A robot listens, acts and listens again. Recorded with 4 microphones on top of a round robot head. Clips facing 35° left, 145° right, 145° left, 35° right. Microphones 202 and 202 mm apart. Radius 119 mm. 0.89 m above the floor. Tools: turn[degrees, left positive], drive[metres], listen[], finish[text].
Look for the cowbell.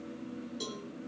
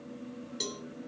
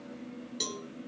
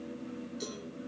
Thought: The cowbell: 145° left.
Action: turn[145]
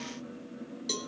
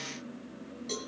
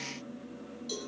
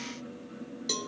Thought: The cowbell is now 10° right.
Action: turn[-10]
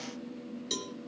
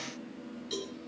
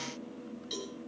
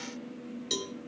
Action: finish[Facing the cowbell.]